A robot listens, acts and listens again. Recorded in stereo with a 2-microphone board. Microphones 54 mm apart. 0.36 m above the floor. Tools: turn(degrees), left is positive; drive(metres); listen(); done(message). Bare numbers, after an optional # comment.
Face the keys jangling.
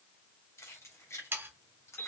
# The keys jangling: about 60° left or 120° left.
turn(60)
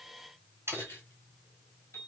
# So it is at 45° left.
turn(45)
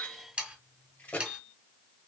# The keys jangling is now 30° left.
turn(30)
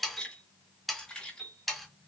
# The keys jangling is now 15° left.
turn(15)
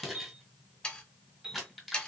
done("Facing the keys jangling.")